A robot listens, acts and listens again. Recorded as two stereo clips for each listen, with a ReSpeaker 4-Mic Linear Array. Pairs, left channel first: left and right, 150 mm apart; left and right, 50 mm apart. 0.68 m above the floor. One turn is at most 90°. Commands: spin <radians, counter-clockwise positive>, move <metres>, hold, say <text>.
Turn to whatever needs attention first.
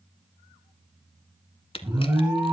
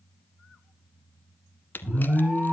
spin -0.35
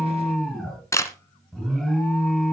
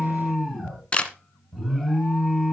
say Found it: an alarm, straight ahead, over 4 m away.